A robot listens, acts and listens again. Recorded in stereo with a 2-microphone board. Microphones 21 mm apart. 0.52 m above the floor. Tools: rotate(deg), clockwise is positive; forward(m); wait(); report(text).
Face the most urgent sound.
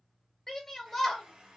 rotate(-20)
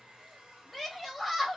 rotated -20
report("Facing the shout, 1 to 2 m away.")